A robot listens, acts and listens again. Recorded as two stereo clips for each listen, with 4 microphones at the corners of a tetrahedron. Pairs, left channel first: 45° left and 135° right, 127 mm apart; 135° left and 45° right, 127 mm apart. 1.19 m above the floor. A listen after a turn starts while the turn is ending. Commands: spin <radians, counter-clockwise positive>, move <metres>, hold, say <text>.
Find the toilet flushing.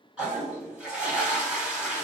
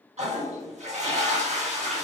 spin -0.96
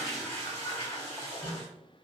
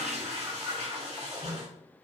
spin -0.26
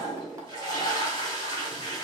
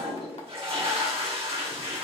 say Facing the toilet flushing, 1 to 2 m away.